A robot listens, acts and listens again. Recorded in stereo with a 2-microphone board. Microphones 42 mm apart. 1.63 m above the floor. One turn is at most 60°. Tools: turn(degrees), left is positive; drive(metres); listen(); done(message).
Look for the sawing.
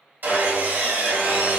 turn(degrees=-55)
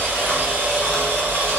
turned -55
turn(degrees=-60)
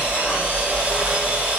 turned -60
turn(degrees=-35)
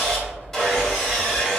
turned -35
turn(degrees=10)
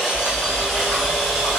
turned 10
done("Facing the sawing, 1 to 2 m away.")